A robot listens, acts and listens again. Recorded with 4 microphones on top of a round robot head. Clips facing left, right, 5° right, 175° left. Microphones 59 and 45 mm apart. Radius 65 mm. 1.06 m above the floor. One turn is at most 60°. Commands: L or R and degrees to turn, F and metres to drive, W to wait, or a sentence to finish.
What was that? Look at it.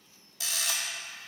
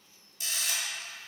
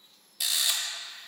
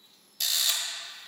L60
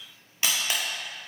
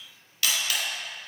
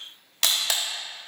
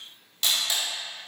L20
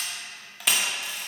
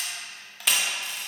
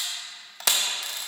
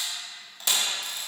Found it: a camera shutter, straight ahead.